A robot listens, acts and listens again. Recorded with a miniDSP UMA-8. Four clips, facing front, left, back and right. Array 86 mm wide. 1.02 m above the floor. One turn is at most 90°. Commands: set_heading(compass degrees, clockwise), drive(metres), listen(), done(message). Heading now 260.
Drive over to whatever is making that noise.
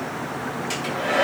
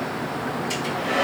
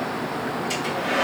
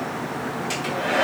set_heading(320)
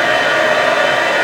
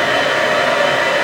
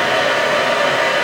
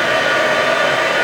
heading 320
set_heading(330)
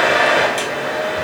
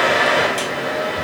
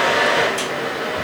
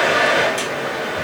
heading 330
drive(1.0)
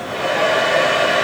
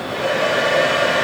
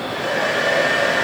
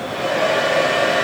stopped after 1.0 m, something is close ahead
done("Arrived at the hair dryer, straight ahead.")